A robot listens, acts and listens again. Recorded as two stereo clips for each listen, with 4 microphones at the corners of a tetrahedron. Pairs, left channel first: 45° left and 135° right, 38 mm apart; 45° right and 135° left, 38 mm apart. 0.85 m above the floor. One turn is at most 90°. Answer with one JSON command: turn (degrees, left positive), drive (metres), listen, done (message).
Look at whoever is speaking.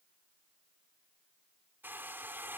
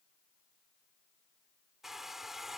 {"listen": true}
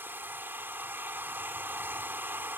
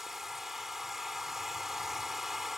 {"listen": true}
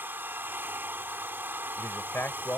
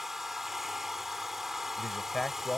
{"turn": 40}
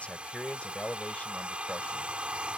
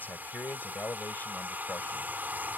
{"turn": -10}
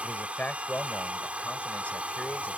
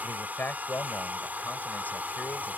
{"done": "Found it: a man speaking, straight ahead."}